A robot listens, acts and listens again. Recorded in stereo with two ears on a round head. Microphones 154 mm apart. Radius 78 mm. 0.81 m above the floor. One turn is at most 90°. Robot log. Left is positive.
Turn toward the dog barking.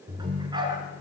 note: The dog barking: about 25° right or 155° right.
cmd yaw -25
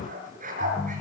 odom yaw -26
note: So it is at 130° right.
cmd yaw -90
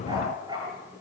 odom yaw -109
note: The dog barking is now 25° right.
cmd yaw -25
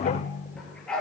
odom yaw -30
end: Facing the dog barking, over 4 m away.